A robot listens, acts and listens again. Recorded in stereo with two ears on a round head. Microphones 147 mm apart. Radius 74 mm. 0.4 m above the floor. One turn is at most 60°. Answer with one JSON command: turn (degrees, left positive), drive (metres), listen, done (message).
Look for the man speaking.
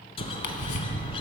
{"listen": true}
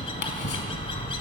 {"listen": true}
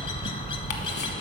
{"done": "I can't make out a man speaking, only a bird."}